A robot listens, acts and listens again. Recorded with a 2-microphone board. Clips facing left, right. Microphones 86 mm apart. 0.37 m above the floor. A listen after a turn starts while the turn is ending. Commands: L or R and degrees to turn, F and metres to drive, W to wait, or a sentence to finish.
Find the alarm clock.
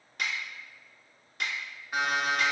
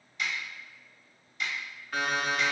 L20
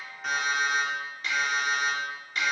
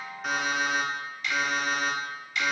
Found it: an alarm clock, straight ahead, under 1 m away.